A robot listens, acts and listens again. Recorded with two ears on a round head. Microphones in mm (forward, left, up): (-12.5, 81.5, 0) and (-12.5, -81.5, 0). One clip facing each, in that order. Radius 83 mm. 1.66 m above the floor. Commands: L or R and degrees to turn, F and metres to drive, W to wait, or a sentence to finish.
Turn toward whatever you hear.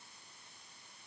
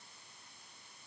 W
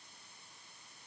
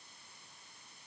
W
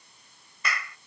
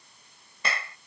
R25
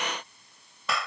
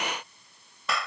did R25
Facing the clap.